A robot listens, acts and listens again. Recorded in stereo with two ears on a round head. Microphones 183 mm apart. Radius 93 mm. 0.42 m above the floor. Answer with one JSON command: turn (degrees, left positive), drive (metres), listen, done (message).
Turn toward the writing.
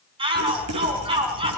{"turn": -90}
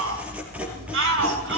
{"done": "Facing the writing, 2 to 4 m away."}